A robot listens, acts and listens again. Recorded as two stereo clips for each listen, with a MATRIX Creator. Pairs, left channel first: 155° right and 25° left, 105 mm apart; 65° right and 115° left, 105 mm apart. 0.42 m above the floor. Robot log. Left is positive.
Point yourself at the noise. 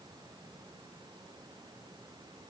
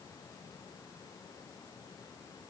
cmd idle
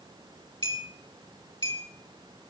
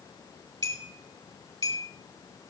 note: The clink: 160° left.
cmd yaw +160
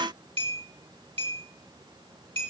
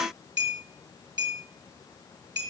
note: The clink is now 60° left.
cmd yaw +60
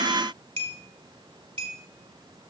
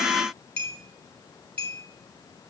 note: The clink is now 10° left.
cmd yaw +10
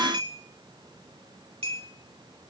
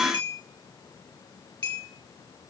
end: Facing the clink.